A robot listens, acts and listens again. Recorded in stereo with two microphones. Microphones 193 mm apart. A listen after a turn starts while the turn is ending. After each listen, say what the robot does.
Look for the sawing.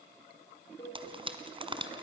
Keep listening.
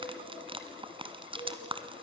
Keep listening.
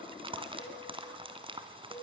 I can't make out sawing, only a cowbell and frying.